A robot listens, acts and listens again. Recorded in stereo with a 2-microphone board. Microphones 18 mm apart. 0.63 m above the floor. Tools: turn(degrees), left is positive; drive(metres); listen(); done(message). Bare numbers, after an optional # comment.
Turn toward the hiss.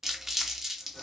listen()
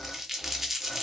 listen()
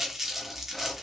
done("I can't make out a hiss to turn to.")